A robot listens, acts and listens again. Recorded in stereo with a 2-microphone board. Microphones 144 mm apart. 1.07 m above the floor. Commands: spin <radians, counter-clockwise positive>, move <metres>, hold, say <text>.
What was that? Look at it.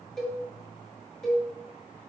spin 0.52
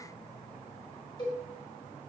spin 2.53
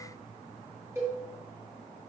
spin -0.35
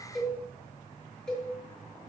say Found it: a cowbell, straight ahead, 1 to 2 m away.